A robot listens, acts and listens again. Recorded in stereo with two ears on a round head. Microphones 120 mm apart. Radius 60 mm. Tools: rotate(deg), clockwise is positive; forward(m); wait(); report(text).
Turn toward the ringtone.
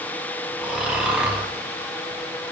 wait()
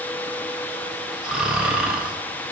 wait()
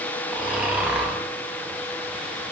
report("I can't make out a ringtone, only snoring.")